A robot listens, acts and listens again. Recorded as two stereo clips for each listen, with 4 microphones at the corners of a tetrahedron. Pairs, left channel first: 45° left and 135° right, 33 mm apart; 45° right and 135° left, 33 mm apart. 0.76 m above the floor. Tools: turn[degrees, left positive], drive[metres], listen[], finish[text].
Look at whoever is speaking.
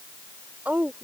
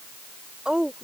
Thought: The woman speaking: 165° right.
Action: turn[-165]
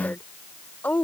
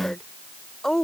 Thought: The woman speaking is now 30° left.
Action: turn[30]
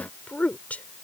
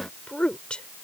Thought: The woman speaking is now 10° left.
Action: turn[10]
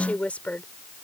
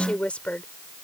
Action: finish[Found it: a woman speaking, straight ahead.]